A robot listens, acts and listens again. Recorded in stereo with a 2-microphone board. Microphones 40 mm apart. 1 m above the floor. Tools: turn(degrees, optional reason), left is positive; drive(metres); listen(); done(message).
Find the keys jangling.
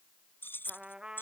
turn(degrees=60, reason="The keys jangling: about 60° left or 120° left.")
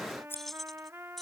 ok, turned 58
done("Found it: keys jangling, straight ahead.")